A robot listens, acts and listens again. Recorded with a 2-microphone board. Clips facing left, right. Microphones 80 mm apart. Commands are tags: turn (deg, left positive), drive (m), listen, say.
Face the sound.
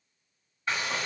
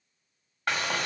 <turn deg="-75"/>
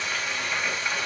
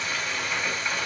<say>Found it: frying, straight ahead.</say>